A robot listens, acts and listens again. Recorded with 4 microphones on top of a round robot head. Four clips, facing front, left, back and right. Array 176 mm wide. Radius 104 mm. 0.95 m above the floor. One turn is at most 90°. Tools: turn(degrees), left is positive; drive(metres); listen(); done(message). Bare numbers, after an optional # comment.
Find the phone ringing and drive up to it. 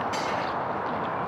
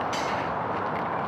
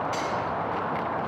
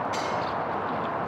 listen()
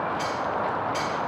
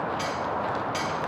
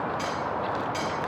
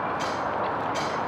listen()
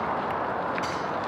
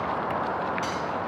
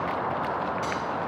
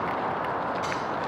done("I can't make out a phone ringing to turn to.")